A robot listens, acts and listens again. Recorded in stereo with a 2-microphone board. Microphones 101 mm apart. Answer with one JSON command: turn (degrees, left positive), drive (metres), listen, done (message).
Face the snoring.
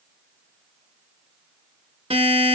{"listen": true}
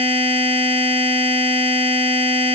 {"listen": true}
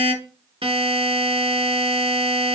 {"done": "I can't make out snoring to turn to."}